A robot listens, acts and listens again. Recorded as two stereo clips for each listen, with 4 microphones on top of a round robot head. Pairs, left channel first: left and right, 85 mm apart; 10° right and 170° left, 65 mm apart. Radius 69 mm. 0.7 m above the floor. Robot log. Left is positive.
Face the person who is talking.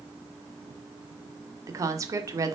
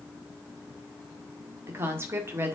note: The woman speaking: 140° right.
cmd yaw -140
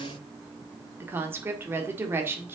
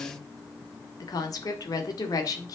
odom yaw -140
note: The woman speaking is now 30° right.
cmd yaw -30
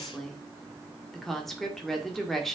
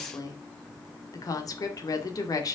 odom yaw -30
end: Facing the woman speaking, 2 to 4 m away.